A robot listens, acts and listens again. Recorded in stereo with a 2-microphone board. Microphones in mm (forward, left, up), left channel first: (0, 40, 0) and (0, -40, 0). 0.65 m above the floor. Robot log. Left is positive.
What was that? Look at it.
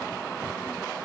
cmd idle
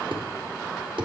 cmd yaw -90
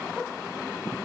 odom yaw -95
end: Facing where the thud came from. I can't hear it now.